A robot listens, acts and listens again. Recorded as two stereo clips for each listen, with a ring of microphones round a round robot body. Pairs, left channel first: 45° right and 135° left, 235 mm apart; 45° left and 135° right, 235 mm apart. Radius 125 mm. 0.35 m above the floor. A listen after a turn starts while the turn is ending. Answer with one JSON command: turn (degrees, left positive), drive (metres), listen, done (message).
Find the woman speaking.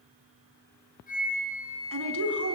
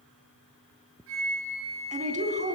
{"turn": 165}
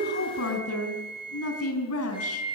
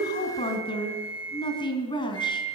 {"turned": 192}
{"turn": -25}
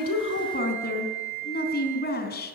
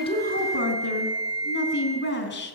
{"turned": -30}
{"done": "Facing the woman speaking."}